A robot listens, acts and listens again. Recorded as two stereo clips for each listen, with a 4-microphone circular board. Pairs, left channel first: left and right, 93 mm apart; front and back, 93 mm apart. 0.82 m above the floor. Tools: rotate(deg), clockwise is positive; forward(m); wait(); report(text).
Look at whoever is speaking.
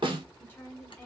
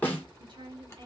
rotate(-155)
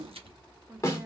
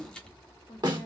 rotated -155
rotate(15)
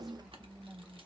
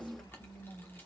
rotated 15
rotate(15)
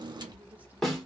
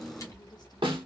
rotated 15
wait()
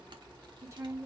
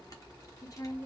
rotate(40)
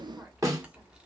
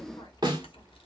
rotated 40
wait()
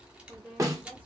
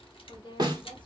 rotate(15)
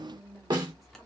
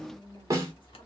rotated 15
report("Found it: a woman speaking, straight ahead.")